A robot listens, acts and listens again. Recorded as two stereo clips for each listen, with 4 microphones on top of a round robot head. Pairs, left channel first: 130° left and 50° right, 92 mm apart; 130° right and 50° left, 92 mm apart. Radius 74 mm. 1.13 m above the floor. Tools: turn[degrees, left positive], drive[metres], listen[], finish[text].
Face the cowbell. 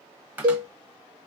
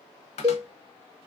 Action: finish[Facing the cowbell.]